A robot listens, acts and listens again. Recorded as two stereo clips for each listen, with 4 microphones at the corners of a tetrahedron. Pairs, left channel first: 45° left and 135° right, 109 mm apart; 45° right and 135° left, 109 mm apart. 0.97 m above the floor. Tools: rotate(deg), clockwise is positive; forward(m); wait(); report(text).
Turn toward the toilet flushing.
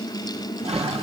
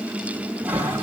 rotate(150)
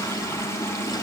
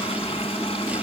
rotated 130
rotate(20)
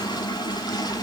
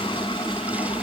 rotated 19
wait()
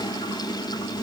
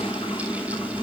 report("I heard a toilet flushing from this way, but can't make it out now.")